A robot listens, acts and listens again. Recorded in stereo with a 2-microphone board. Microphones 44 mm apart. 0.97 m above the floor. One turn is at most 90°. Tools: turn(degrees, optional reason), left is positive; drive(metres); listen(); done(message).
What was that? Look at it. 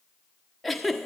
turn(degrees=30)
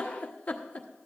turn(degrees=90, reason="So it is at 145° left.")
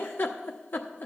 turn(degrees=55, reason="The giggle is now 55° left.")
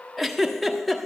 done("Facing the giggle.")